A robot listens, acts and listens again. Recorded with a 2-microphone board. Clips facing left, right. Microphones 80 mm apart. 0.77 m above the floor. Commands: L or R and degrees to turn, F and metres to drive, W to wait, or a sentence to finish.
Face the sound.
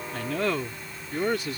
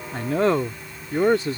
R30
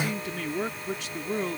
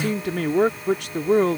R115
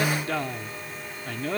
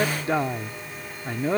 R25
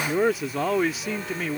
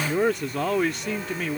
Facing the man speaking.